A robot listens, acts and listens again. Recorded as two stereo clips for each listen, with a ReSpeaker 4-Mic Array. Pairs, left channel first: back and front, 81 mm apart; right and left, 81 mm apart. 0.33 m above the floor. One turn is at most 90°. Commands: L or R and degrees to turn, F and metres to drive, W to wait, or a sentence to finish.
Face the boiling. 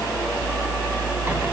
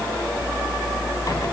W
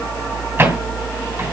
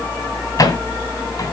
W
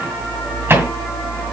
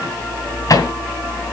I can't make out boiling to turn to.